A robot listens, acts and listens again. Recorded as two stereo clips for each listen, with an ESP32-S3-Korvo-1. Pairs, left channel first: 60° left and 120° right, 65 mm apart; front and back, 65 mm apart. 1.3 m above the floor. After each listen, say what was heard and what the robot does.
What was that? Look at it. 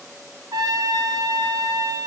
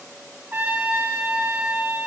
The trumpet: 115° right. Turn 115° right.
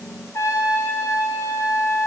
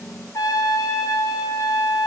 The trumpet is now 20° left. Turn 20° left.
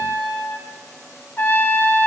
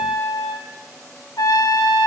Found it: a trumpet, straight ahead.